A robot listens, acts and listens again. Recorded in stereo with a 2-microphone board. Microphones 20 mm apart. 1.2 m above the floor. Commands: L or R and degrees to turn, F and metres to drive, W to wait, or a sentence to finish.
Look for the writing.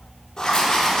L40
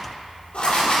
L105
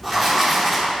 Found it: writing, straight ahead, 1 to 2 m away.